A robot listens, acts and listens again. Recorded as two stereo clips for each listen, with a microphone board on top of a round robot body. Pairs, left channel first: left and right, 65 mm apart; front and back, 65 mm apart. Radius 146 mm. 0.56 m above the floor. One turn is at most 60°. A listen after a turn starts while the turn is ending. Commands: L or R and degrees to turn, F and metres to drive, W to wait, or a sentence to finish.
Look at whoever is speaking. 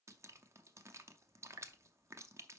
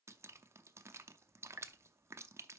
W
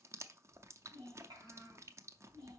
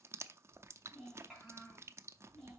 R60
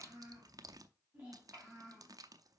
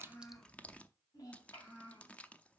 R30
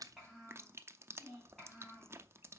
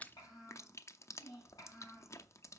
Facing the child speaking, 2 to 4 m away.